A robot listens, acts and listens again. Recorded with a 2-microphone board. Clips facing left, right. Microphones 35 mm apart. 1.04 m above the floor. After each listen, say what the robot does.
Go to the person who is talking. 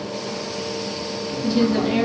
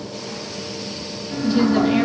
Turn 30° right.
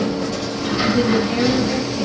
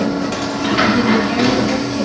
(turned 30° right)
Keep listening.
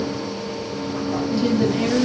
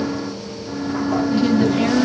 Turn 145° right.
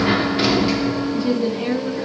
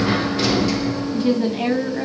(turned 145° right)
Turn 50° right.
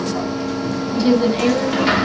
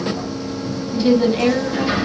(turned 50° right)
Turn 10° right.
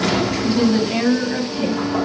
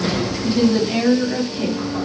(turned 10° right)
Drive 1.0 m forward.
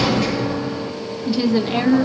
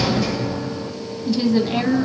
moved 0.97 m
Turn 15° left.
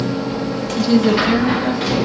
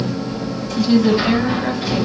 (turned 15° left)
Drive 1.0 m forward.
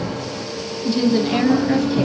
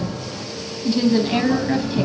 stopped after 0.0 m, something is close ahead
Arrived at the woman speaking, straight ahead.